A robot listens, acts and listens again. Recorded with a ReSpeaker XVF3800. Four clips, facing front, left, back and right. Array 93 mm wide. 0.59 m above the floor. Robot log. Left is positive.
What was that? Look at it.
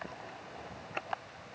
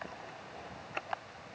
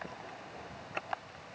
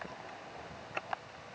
cmd idle
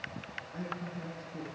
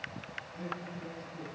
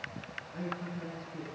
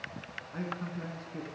note: The man speaking: 85° right.
cmd yaw -85
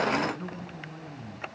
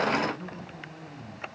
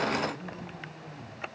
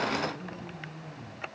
note: The man speaking is now 10° left.
cmd yaw +10
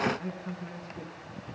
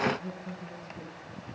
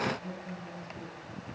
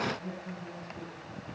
end: Found it: a man speaking, straight ahead.